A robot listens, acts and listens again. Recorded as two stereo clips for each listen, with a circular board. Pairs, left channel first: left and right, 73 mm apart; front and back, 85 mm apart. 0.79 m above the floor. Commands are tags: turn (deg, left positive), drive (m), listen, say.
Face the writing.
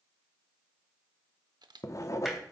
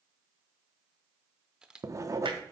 <turn deg="130"/>
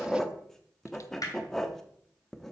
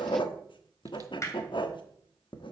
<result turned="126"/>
<say>Found it: writing, straight ahead.</say>